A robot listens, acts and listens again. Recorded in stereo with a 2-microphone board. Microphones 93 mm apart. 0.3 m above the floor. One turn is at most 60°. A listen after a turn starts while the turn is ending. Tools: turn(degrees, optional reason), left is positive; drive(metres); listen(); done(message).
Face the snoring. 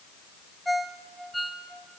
listen()
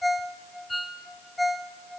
listen()
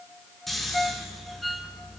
turn(degrees=30)
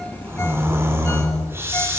turn(degrees=-25, reason="So it is at 25° right.")
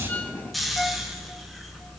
done("Found it: snoring, straight ahead.")